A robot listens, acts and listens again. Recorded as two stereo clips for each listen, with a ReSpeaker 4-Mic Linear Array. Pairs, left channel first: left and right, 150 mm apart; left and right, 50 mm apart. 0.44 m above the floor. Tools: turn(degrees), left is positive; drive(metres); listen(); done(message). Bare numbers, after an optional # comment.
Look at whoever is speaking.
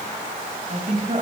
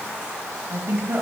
# The woman speaking: about 50° right or 130° right.
turn(-50)
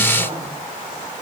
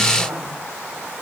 listen()
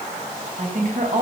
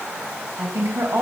# So it is at 75° right.
turn(-75)
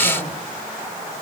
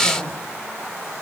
listen()
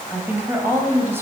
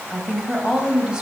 # The woman speaking is now 20° right.
turn(-20)
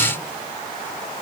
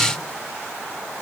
listen()
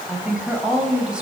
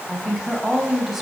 done("Found it: a woman speaking, straight ahead.")